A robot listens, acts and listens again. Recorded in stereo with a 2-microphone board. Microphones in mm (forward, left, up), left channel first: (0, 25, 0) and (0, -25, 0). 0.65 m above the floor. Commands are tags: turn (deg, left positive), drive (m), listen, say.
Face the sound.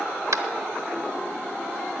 <turn deg="-90"/>
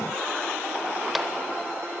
<listen/>
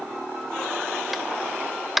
<say>Facing the tapping, under 1 m away.</say>